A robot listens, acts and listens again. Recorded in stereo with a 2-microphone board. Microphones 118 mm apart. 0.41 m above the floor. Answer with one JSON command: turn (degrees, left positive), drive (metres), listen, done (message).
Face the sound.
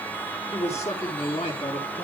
{"turn": 65}
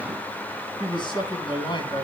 {"turn": 40}
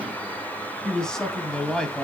{"done": "Found it: a man speaking, straight ahead, 2 to 4 m away."}